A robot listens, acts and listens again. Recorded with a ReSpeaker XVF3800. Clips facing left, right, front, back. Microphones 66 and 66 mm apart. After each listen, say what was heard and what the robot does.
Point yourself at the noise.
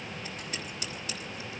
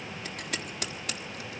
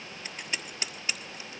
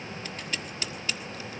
The scissors: 70° right. Turn 70° right.
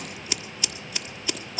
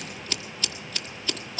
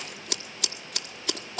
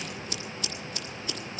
The scissors is now 15° left. Turn 15° left.
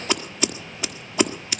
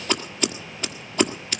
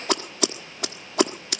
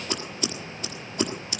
Found it: scissors, straight ahead.